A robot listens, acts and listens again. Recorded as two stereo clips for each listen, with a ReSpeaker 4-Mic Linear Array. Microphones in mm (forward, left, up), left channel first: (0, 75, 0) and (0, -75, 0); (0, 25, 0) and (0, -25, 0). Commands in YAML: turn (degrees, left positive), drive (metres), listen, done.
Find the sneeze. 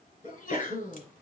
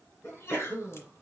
turn: 55
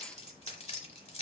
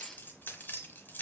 listen: true
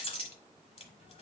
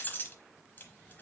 done: "I heard a sneeze, but can't make it out now. It was about straight ahead or 70° left."